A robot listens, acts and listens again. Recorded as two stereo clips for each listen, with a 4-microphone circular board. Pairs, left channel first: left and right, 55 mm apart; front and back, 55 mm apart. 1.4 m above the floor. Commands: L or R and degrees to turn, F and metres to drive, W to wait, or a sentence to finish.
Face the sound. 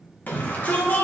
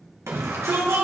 L145
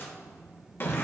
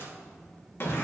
L40
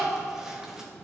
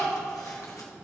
R10
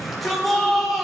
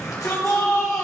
Facing the shout.